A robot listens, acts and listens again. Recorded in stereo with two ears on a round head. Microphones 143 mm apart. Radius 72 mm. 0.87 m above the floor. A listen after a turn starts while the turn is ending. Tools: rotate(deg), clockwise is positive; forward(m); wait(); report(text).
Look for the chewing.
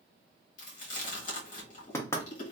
rotate(-50)
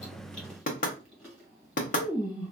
report("Found it: chewing, straight ahead.")